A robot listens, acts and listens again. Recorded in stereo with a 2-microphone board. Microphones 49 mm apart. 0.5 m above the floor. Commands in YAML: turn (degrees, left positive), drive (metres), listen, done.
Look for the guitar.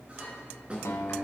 turn: 90
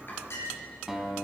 done: "Found it: a guitar, straight ahead."